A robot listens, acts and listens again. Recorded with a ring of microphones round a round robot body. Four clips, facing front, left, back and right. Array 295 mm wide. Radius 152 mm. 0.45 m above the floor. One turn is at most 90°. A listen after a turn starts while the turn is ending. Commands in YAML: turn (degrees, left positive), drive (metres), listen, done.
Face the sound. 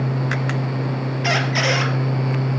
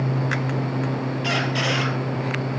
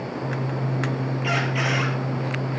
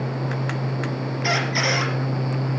done: "Found it: a squeak, straight ahead."